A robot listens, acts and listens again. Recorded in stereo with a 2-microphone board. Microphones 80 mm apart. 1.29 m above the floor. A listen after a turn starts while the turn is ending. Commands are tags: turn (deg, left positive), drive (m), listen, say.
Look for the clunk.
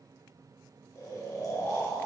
<listen/>
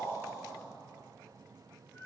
<listen/>
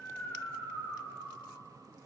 <say>I can't make out a clunk to turn to.</say>